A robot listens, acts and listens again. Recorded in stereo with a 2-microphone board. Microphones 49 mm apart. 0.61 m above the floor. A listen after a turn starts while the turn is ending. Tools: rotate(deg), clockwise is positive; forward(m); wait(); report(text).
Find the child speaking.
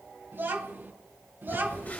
rotate(45)
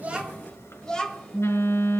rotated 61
rotate(-15)
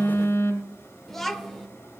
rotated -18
report("Facing the child speaking, 1 to 2 m away.")